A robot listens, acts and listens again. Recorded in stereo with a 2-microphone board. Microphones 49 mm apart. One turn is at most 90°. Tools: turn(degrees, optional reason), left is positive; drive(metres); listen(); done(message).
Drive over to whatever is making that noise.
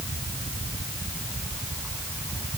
listen()
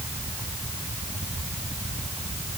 listen()
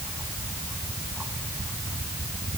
done("I can't make out anything.")